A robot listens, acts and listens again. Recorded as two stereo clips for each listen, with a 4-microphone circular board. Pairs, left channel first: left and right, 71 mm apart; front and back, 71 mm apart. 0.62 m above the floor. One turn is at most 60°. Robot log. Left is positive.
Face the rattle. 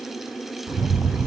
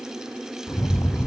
note: The rattle: 45° right.
cmd yaw -45
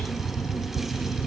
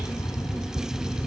note: The rattle is now 10° right.
cmd yaw -10
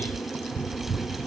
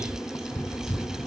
end: Found it: a rattle, straight ahead, 1 to 2 m away.